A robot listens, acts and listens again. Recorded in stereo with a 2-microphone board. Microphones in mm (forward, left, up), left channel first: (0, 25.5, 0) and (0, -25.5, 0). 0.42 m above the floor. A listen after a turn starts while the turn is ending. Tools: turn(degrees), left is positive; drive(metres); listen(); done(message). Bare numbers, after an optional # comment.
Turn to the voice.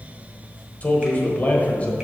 # The man speaking: about 30° left or 150° left.
turn(30)
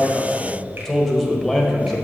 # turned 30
done("Facing the man speaking, 1 to 2 m away.")